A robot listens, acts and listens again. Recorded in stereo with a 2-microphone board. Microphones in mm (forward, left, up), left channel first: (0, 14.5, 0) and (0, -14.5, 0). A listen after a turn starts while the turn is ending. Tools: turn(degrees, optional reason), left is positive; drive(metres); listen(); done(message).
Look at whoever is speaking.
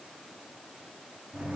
listen()
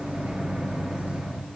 listen()
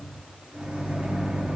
done("I can't make out anyone speaking to turn to.")